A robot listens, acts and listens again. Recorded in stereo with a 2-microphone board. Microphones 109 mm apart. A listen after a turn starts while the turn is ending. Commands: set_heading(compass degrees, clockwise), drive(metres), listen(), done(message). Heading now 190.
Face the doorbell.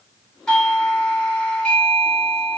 set_heading(160)
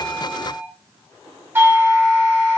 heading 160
set_heading(180)
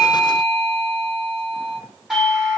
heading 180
done("Facing the doorbell.")